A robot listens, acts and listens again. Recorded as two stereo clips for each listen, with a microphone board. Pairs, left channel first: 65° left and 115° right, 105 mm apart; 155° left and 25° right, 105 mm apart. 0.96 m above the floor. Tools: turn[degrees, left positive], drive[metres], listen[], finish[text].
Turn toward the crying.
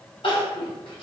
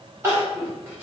Thought: The crying: 40° left.
Action: turn[40]
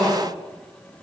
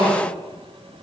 Action: finish[Found it: crying, straight ahead, 1 to 2 m away.]